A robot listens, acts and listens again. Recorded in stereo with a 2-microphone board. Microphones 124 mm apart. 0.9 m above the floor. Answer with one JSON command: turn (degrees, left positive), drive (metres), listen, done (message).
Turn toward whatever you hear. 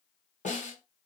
{"turn": 90}
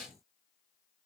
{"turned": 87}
{"done": "Facing the snare drum."}